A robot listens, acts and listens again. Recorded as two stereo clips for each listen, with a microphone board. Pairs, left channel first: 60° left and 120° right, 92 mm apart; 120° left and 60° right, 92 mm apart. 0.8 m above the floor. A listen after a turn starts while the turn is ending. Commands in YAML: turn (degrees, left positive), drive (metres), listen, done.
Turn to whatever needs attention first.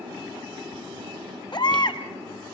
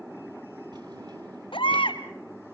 turn: 95
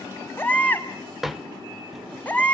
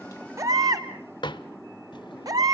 turn: -10
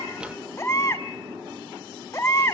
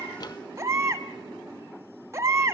done: "Facing the baby crying, 1 to 2 m away."